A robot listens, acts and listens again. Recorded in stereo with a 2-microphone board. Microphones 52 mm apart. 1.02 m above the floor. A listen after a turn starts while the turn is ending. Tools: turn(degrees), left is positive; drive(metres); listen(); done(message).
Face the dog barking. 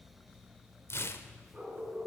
turn(degrees=-25)
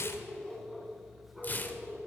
done("Facing the dog barking.")